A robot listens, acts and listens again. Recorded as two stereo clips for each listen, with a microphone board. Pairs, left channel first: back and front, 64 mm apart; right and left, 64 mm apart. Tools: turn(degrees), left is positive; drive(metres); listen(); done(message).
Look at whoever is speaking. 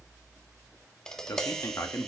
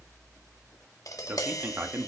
turn(degrees=145)
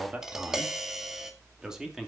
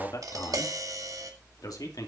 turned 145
turn(degrees=-80)
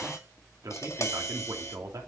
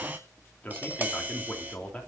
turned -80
turn(degrees=-20)
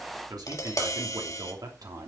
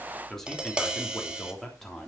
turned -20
done("Facing the man speaking.")